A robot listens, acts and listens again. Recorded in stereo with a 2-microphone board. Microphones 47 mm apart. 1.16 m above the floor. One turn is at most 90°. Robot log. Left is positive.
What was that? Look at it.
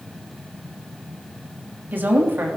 note: The woman speaking: about 50° right or 130° right.
cmd yaw -50
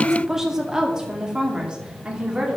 note: So it is at 25° right.
cmd yaw -25
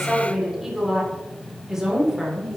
note: The woman speaking is now 10° right.
cmd yaw -10
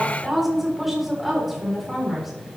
end: Found it: a woman speaking, straight ahead.